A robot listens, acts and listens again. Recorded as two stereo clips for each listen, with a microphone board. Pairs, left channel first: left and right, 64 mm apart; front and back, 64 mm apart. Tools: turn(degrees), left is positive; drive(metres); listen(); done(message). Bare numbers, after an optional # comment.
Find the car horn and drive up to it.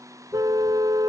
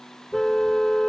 # The car horn: 85° right.
turn(-85)
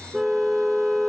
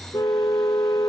drive(1.0)
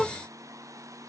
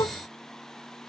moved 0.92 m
drive(1.0)
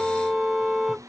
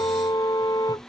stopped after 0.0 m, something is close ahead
done("Something is in my way. I am facing the car horn but have not reached it.")